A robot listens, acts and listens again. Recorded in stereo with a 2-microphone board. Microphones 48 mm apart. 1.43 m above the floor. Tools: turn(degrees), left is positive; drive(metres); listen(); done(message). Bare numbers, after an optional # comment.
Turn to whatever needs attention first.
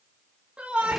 # The shout: about 25° right or 155° right.
turn(-25)
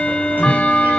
listen()
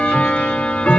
listen()
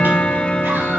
done("I heard a shout, but can't make it out now. It was about straight ahead or 130° right.")